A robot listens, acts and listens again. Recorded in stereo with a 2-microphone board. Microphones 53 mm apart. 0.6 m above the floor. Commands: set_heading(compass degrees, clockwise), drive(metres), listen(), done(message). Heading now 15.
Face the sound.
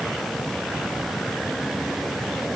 listen()
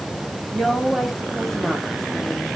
set_heading(345)
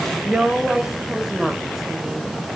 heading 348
set_heading(18)
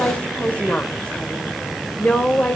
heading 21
set_heading(351)
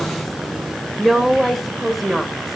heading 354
done("Found it: a woman speaking, straight ahead, 2 to 4 m away.")